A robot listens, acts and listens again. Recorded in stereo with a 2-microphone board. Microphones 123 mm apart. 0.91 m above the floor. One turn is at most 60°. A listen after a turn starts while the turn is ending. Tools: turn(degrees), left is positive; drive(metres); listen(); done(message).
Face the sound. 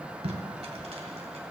turn(degrees=-55)
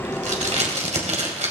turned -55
turn(degrees=-60)
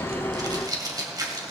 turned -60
turn(degrees=-30)
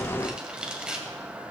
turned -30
done("Found it: tape being pulled, straight ahead.")